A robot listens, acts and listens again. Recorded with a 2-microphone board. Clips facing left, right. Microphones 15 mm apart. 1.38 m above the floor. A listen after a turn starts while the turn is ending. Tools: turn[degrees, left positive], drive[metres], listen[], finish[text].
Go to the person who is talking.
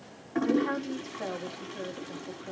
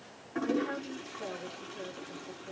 Thought: The woman speaking: about 65° left or 115° left.
Action: turn[65]
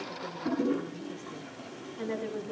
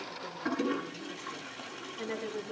Action: drive[1.0]
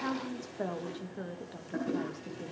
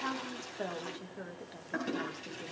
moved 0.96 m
Action: drive[1.0]
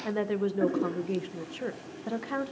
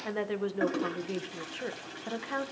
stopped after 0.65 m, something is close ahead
Action: finish[I am next to the woman speaking.]